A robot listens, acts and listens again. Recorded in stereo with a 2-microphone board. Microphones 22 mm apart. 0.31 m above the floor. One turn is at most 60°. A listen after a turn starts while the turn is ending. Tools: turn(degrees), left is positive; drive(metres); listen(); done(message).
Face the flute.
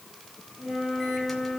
turn(degrees=-30)
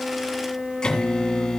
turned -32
turn(degrees=-60)
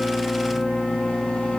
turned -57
turn(degrees=-60)
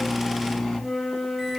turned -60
done("Found it: a flute, straight ahead, over 4 m away.")